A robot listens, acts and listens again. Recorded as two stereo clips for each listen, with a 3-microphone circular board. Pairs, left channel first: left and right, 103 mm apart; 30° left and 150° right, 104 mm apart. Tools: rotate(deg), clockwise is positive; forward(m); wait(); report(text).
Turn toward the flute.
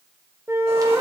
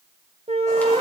rotate(155)
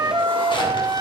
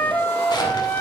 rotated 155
rotate(45)
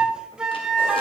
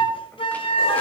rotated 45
rotate(10)
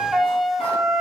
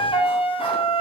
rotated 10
report("Facing the flute, under 1 m away.")